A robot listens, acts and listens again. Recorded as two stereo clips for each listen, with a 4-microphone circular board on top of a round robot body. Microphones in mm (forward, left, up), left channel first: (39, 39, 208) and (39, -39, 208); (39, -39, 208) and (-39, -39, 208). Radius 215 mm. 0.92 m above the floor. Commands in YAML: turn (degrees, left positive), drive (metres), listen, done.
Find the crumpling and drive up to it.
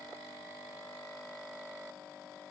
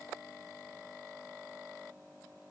listen: true
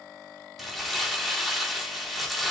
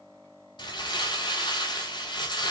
drive: 1.0
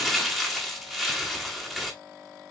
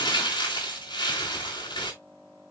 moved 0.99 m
drive: 1.0
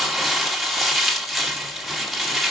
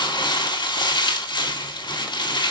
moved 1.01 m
drive: 1.0
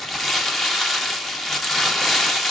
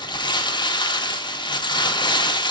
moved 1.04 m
drive: 1.0
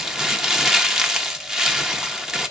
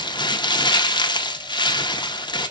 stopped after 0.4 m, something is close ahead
turn: -10
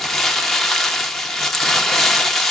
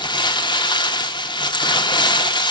done: "I am next to the crumpling."